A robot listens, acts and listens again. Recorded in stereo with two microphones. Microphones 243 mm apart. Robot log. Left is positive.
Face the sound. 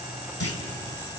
note: The clunk: about 70° left or 110° left.
cmd yaw +70
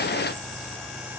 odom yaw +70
cmd idle
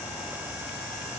end: I heard a clunk, but can't make it out now. It was about straight ahead or 40° left.